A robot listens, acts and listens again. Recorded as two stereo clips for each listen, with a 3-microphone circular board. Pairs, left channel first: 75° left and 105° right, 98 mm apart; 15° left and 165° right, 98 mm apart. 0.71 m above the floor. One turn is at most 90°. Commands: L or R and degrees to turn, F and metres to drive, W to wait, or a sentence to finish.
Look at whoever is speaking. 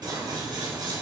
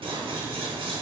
W
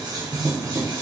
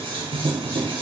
W
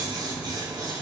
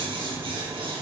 I can't make out anyone speaking, only scissors.